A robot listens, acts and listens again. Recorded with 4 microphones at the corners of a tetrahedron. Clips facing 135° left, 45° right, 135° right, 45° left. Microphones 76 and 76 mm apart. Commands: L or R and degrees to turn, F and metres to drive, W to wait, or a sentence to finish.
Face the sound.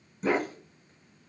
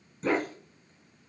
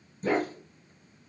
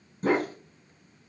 L55
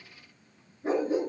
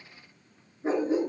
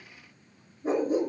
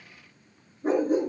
L20
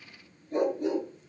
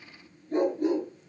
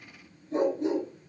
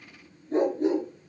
Found it: a dog barking, straight ahead.